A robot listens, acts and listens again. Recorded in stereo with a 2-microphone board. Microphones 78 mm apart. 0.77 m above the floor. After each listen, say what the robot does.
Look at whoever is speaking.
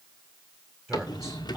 Turn 30° right.
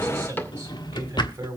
Turn 145° right.
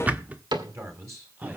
Turn 40° right.
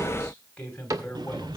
Turn 15° left.
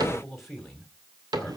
Found it: a man speaking, straight ahead, over 4 m away.